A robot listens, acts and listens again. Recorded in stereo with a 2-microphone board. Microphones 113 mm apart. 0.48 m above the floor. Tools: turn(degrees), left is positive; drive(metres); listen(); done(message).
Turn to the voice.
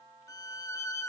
listen()
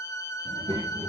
turn(degrees=-50)
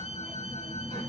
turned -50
turn(degrees=20)
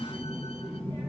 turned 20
turn(degrees=10)
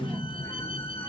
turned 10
turn(degrees=10)
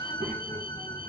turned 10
done("Found it: a child speaking, straight ahead.")